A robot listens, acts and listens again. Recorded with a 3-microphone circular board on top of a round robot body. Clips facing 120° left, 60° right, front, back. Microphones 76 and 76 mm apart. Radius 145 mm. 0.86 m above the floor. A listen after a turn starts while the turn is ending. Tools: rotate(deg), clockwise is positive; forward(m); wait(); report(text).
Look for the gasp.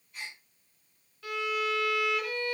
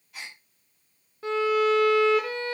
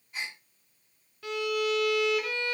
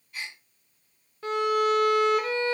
rotate(65)
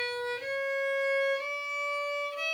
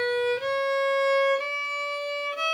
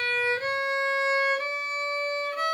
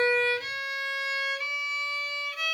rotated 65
report("Facing where the gasp came from. I can't hear it now.")